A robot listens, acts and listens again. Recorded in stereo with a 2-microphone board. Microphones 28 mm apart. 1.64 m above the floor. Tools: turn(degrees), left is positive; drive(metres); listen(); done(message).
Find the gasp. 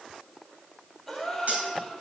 turn(degrees=30)
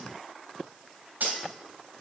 listen()
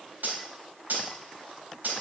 done("I heard a gasp, but can't make it out now. It was about 30° right or 150° left.")